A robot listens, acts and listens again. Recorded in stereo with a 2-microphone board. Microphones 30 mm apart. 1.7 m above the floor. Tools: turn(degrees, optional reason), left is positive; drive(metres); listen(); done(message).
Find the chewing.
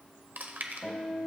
turn(degrees=-70, reason="The chewing: about 70° right or 110° right.")
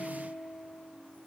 listen()
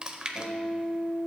turn(degrees=-35, reason="So it is at 35° right.")
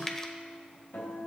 turn(degrees=15, reason="The chewing is now 15° left.")
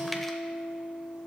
listen()
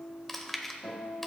done("Facing the chewing.")